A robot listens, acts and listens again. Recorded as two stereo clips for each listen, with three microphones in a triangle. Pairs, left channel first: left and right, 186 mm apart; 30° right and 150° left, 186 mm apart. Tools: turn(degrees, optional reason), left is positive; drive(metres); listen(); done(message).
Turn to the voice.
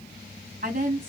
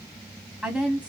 turn(degrees=-125, reason="The woman speaking: 125° right.")
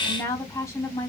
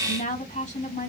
turn(degrees=15, reason="The woman speaking is now 15° left.")
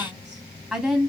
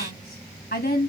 done("Found it: a woman speaking, straight ahead.")